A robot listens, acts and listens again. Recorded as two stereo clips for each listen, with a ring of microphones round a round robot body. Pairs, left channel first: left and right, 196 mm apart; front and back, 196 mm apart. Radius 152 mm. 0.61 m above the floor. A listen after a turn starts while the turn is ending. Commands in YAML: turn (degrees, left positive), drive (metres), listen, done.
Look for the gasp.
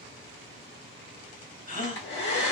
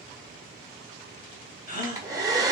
turn: 40
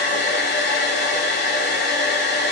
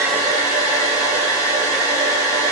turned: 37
done: "Facing where the gasp came from. I can't hear it now."